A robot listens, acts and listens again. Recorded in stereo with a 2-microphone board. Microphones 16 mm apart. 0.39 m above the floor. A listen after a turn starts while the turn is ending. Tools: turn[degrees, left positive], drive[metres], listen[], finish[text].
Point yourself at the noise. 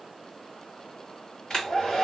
Thought: The hair dryer: about 50° left or 130° left.
Action: turn[50]
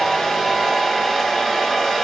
Thought: So it is at 10° left.
Action: turn[10]
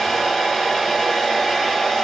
Action: finish[Found it: a hair dryer, straight ahead, 2 to 4 m away.]